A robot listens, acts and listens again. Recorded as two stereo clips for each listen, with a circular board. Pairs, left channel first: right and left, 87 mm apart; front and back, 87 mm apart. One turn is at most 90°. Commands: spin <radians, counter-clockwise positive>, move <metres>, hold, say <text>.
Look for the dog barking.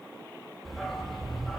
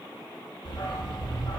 say Facing the dog barking.